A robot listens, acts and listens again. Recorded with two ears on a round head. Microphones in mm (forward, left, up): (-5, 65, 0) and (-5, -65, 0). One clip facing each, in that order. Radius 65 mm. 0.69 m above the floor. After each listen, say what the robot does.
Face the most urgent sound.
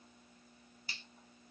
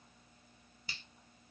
Keep listening.
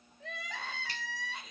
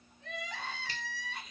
Turn 70° left.
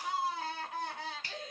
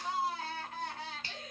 Turn 15° left.
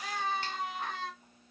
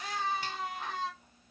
Facing the crying, 1 to 2 m away.